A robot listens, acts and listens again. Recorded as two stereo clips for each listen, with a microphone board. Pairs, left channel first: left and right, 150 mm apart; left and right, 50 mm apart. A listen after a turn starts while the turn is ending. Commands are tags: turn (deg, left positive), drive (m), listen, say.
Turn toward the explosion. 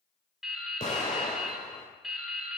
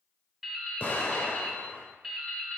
<turn deg="45"/>
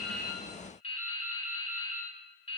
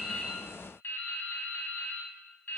<listen/>
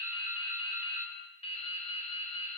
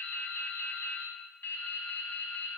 <say>I heard an explosion, but can't make it out now. It was about straight ahead or 90° left.</say>